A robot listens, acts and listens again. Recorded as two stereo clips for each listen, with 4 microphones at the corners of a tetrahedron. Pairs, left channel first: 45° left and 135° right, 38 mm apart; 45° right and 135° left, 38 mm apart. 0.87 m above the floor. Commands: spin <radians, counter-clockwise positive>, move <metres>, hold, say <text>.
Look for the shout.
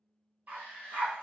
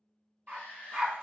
spin -1.57
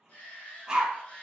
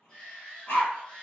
say Facing the shout, 1 to 2 m away.